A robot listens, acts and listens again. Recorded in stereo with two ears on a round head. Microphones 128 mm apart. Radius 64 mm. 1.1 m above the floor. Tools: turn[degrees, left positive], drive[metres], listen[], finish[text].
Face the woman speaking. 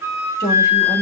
Thought: The woman speaking: about 20° left or 160° left.
Action: turn[20]
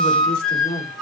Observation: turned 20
Thought: The woman speaking: about 40° left or 140° left.
Action: turn[40]
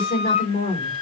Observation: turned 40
Thought: So it is at 110° left.
Action: turn[110]
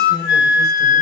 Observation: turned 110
Thought: The woman speaking is now 25° left.
Action: turn[25]
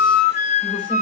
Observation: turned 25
Action: listen[]
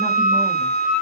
Action: listen[]
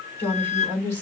Thought: The woman speaking is now 15° left.
Action: turn[15]
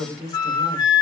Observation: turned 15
Action: finish[Found it: a woman speaking, straight ahead.]